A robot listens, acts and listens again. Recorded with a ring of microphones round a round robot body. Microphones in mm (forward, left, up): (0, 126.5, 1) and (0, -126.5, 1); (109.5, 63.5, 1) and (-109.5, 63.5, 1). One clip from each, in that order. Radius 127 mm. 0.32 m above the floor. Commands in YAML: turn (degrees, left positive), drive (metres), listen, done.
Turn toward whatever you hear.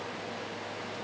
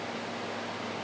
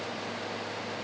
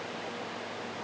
listen: true
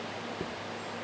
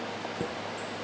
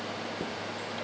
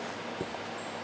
turn: -120
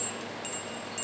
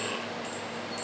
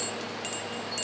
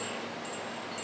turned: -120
listen: true
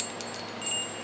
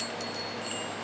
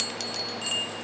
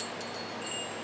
turn: 25
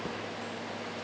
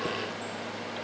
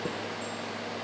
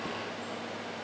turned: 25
listen: true
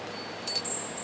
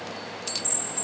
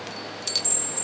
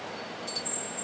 turn: -10
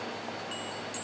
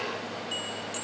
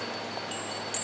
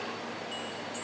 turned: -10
listen: true
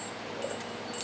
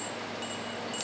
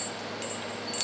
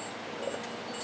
listen: true
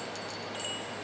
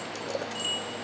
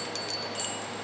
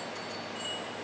done: "Found it: a chime, straight ahead, under 1 m away."